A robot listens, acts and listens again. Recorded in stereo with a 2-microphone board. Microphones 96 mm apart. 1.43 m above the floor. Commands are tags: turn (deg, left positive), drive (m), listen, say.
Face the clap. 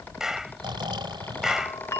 <turn deg="-30"/>
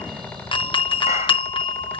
<listen/>
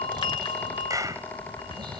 <turn deg="-145"/>
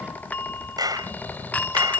<turn deg="-45"/>
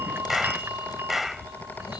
<say>Found it: a clap, straight ahead.</say>